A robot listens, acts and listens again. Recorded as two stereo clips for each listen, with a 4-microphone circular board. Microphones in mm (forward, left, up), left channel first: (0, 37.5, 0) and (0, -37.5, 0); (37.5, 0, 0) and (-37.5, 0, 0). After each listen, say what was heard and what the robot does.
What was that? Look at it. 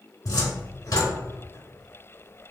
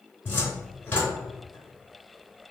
The cupboard door: 60° left. Turn 60° left.
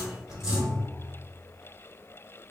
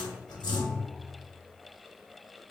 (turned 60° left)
The cupboard door is now 10° right. Turn 10° right.
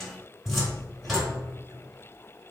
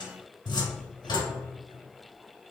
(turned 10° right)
Facing the cupboard door, under 1 m away.